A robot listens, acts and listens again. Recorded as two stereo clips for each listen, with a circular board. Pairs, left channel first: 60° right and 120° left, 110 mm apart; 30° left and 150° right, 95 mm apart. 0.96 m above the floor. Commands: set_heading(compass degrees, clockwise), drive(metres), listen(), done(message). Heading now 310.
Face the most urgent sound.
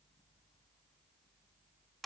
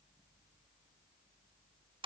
listen()
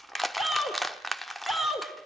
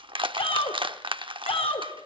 set_heading(275)
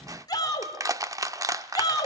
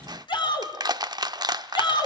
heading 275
done("Facing the shout, 2 to 4 m away.")